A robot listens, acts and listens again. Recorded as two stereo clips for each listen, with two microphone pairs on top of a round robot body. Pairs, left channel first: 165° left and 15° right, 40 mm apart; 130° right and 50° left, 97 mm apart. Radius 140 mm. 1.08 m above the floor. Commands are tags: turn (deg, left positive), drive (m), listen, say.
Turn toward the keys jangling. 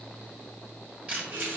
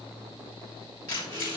<turn deg="-70"/>
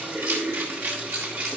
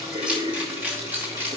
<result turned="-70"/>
<turn deg="-15"/>
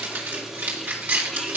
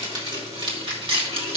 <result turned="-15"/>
<turn deg="25"/>
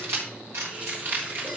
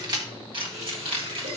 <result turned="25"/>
<turn deg="20"/>
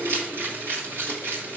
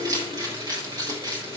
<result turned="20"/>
<say>Found it: keys jangling, straight ahead.</say>